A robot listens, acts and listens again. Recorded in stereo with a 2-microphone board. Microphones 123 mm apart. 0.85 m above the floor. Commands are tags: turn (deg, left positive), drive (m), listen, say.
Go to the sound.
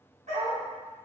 <turn deg="-90"/>
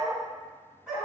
<turn deg="-10"/>
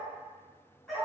<drive m="1.0"/>
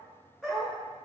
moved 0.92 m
<drive m="1.0"/>
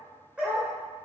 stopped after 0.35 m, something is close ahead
<turn deg="-10"/>
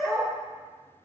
<say>Arrived at the dog barking, straight ahead.</say>